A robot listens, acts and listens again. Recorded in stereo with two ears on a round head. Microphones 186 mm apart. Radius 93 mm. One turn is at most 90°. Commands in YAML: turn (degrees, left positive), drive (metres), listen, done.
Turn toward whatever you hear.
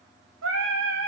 turn: -70
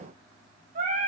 turn: -40
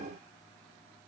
listen: true
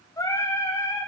turn: 15
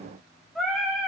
done: "Found it: singing, straight ahead, 2 to 4 m away."